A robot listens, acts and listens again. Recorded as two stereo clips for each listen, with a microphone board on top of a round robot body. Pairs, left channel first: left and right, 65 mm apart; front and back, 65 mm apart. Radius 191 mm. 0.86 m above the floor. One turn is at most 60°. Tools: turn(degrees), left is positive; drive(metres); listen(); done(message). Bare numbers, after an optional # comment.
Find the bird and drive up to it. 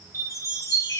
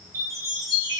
listen()
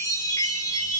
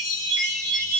listen()
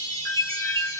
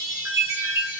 done("I can't make out a bird, only a chime.")